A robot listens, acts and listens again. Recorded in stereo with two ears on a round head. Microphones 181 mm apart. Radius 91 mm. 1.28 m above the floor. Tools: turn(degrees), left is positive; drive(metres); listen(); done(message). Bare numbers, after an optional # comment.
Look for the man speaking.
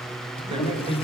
# The man speaking: about 25° right or 155° right.
turn(-25)
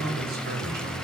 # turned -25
# So it is at 130° right.
turn(-130)
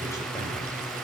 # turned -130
listen()
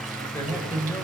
# The man speaking is now 15° left.
turn(15)
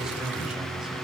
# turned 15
listen()
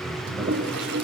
listen()
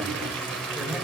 done("I heard a man speaking from this way, but can't make it out now.")